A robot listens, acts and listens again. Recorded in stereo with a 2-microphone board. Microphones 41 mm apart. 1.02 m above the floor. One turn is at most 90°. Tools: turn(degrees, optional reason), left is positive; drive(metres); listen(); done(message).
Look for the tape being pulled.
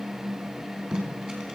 turn(degrees=-20, reason="The tape being pulled: about 20° right or 160° right.")
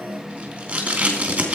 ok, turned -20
turn(degrees=-90, reason="So it is at 140° right.")
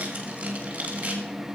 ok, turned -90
turn(degrees=-35, reason="The tape being pulled is now 35° right.")
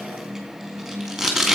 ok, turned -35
done("Found it: tape being pulled, straight ahead, 2 to 4 m away.")